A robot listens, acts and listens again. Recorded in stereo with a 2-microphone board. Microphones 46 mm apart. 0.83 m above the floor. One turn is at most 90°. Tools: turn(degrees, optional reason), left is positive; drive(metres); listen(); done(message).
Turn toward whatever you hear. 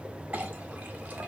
turn(degrees=-35, reason="The clink: about 35° right or 145° right.")
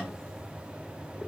listen()
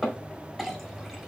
done("Facing the clink.")